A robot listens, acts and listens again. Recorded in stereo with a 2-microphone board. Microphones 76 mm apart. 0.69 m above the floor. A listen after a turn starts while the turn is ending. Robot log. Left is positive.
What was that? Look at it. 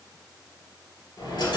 note: The dropped coin: about 60° left or 120° left.
cmd yaw +60
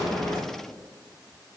cmd idle
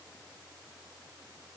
end: I heard a dropped coin, but can't make it out now. It was about straight ahead or 60° left.